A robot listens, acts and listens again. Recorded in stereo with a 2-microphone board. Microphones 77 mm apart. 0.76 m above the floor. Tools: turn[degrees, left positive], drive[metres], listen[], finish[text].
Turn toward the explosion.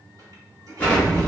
Thought: The explosion: about 20° left or 160° left.
Action: turn[20]
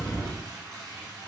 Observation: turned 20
Thought: So it is at 140° left.
Action: turn[140]
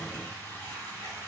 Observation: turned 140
Action: finish[Facing where the explosion came from. I can't hear it now.]